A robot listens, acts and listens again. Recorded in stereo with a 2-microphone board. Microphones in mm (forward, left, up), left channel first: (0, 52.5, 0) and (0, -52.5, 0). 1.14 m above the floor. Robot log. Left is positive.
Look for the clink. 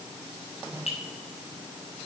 note: The clink: about 70° left or 110° left.
cmd yaw +70
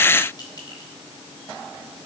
note: So it is at 40° left.
cmd yaw +40
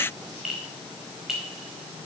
end: Facing the clink.